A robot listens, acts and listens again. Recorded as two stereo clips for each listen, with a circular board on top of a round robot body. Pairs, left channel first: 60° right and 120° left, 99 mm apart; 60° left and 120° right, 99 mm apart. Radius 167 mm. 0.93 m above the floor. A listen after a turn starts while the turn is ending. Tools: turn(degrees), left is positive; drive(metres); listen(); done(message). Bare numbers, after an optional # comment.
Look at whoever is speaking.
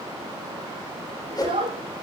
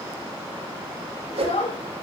# The child speaking: 85° left.
turn(85)
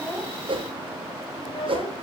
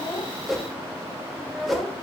# The child speaking is now 35° right.
turn(-35)
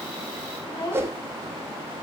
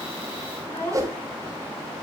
done("Found it: a child speaking, straight ahead, 2 to 4 m away.")